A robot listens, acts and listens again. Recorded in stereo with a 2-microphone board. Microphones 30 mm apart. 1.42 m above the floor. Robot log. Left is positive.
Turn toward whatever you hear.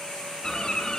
note: The bird: about 25° left or 155° left.
cmd yaw +25
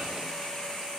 cmd idle
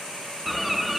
end: Found it: a bird, straight ahead, 2 to 4 m away.